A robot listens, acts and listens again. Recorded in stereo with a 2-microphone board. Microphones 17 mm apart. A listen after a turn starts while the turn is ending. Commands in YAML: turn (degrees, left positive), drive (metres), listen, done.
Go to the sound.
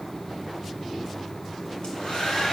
turn: 90
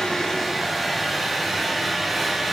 drive: 1.0
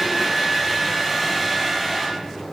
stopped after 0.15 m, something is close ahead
turn: -10
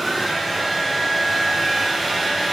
done: "Blocked. The hair dryer is further on, straight ahead."